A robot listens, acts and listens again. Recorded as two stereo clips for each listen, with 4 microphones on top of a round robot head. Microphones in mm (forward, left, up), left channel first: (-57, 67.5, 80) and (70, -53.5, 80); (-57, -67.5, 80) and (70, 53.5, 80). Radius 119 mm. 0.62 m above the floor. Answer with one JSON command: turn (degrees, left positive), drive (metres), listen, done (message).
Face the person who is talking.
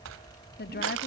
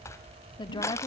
{"turn": 160}
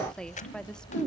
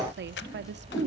{"turn": 50}
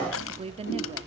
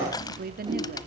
{"turn": 10}
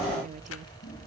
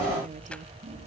{"listen": true}
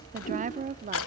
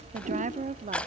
{"done": "Found it: a woman speaking, straight ahead, 1 to 2 m away."}